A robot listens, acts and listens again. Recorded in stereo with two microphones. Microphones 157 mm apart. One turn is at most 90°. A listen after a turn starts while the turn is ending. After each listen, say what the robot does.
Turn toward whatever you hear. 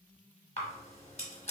Turn 45° left.
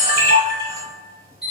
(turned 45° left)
Turn 90° left.
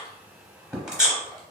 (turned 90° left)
Facing the camera shutter, under 1 m away.